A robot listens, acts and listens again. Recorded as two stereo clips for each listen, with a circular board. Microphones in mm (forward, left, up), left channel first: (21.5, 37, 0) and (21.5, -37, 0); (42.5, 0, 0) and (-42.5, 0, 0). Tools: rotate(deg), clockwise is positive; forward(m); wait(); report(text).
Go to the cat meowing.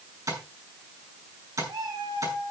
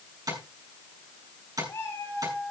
rotate(65)
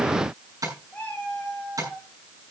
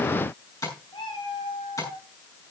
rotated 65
rotate(-20)
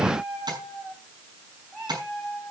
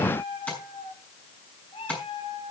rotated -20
forward(1.0)
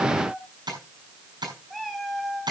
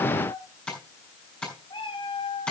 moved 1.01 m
forward(1.0)
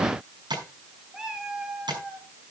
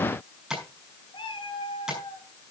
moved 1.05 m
rotate(10)
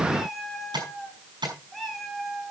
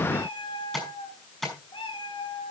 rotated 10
forward(1.0)
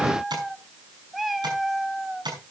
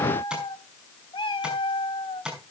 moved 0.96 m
forward(1.0)
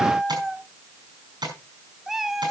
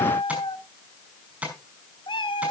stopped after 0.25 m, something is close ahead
report("Arrived at the cat meowing, straight ahead.")